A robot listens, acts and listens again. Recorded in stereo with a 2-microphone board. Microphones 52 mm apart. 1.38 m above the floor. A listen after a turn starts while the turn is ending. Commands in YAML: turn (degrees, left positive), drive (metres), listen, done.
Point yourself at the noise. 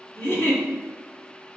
turn: 50
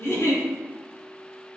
turn: 80
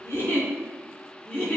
turn: 30
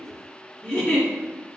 turn: 20
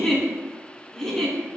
done: "Found it: a giggle, straight ahead."